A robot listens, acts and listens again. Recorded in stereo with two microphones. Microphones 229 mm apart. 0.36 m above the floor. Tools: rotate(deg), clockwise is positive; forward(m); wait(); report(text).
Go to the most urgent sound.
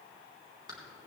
wait()
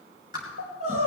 rotate(90)
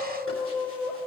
forward(1.0)
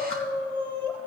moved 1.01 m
forward(1.0)
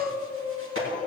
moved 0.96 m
rotate(-20)
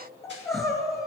forward(1.0)
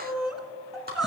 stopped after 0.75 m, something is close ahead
report("I am next to the crying.")